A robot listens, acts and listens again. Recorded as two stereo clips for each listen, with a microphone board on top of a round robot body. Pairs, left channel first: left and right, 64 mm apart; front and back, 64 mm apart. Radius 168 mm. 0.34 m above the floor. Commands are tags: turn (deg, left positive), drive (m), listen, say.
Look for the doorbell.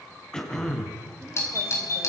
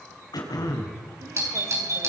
<turn deg="135"/>
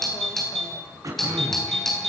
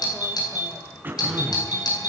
<say>Found it: a doorbell, straight ahead.</say>